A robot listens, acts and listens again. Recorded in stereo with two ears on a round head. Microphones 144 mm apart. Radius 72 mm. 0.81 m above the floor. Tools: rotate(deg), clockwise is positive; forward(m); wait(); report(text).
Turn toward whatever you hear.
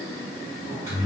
rotate(20)
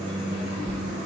report("Found it: a microwave, straight ahead, 1 to 2 m away.")